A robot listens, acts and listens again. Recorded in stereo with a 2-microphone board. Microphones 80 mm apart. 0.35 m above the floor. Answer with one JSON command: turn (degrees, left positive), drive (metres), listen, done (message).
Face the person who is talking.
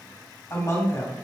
{"turn": 40}
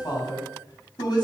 {"turn": 95}
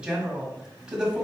{"turn": -15}
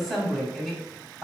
{"done": "Found it: a woman speaking, straight ahead."}